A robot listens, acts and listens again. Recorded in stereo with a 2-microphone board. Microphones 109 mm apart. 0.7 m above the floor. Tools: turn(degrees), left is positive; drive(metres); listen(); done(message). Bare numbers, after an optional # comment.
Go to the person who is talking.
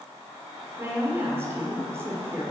# The woman speaking: about 25° right or 155° right.
turn(-25)
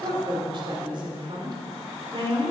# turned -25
# So it is at 125° right.
turn(-125)
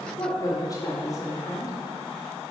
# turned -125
# The woman speaking is now 35° left.
turn(35)
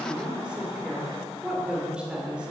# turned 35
# The woman speaking is now 10° right.
turn(-10)
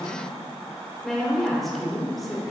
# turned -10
drive(1.0)
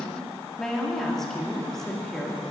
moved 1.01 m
drive(1.0)
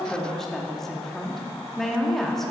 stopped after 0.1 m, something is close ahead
done("Arrived at the woman speaking, straight ahead.")